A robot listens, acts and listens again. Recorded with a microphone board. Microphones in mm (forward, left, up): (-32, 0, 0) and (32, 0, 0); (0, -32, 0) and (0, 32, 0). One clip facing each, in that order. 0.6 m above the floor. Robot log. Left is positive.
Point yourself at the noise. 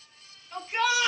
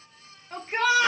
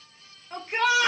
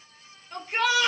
note: The shout: 40° right.
cmd yaw -40
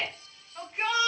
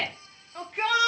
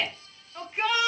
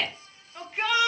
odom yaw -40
end: Found it: a shout, straight ahead, 1 to 2 m away.